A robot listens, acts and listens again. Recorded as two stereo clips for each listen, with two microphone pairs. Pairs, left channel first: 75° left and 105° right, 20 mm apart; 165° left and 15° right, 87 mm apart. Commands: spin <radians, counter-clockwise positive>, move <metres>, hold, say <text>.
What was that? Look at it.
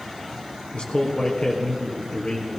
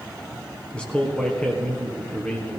spin 1.48
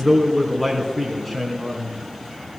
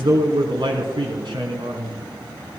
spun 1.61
say Facing the man speaking, 2 to 4 m away.